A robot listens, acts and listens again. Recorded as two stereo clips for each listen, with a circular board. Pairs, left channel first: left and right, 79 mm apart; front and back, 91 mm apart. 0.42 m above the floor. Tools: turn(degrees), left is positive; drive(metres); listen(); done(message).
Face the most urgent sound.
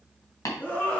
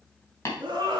turn(degrees=155)
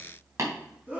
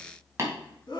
turn(degrees=-20)
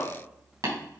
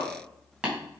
done("Facing the scream, 2 to 4 m away.")